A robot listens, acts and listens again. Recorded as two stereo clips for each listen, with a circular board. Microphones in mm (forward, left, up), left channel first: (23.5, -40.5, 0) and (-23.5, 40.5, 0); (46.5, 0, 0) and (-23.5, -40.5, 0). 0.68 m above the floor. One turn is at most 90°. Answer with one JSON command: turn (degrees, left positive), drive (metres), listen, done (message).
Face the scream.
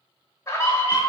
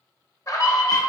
{"turn": -10}
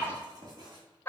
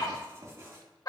{"done": "Facing the scream, under 1 m away."}